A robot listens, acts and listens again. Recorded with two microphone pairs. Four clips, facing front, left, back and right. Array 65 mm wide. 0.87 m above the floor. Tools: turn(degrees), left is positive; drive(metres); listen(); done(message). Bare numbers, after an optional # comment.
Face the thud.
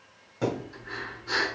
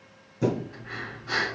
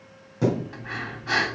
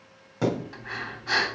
# The thud: 90° right.
turn(-90)
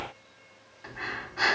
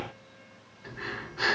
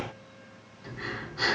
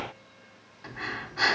done("Facing where the thud came from. I can't hear it now.")